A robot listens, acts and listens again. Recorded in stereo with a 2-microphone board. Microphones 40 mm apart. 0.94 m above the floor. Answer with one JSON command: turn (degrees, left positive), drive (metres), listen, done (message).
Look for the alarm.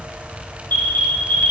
{"turn": 55}
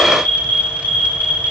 {"turn": 65}
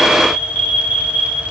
{"turn": 30}
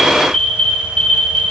{"turn": 10}
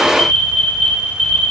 {"done": "Facing the alarm, 2 to 4 m away."}